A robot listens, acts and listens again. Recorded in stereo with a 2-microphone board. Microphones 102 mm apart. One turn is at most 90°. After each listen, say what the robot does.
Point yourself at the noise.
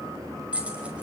Turn 30° right.
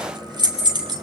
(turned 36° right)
Turn 90° right.
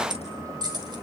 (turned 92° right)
Turn 45° right.
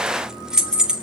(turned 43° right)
Turn 10° right.
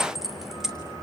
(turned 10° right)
Found it: keys jangling, straight ahead, 2 to 4 m away.